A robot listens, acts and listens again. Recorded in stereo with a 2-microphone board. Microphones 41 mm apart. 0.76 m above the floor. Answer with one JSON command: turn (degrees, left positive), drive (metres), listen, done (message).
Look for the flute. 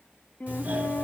{"turn": 40}
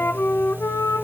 {"turn": 100}
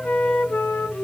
{"turn": 35}
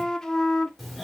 {"turn": 15}
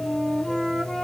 {"done": "Facing the flute, under 1 m away."}